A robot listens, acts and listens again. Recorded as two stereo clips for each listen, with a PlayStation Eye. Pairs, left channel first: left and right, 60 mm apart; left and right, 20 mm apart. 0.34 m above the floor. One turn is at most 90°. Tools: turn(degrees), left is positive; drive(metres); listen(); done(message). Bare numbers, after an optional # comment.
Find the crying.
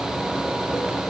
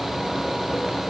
listen()
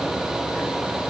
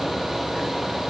listen()
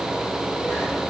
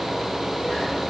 done("I can't make out crying to turn to.")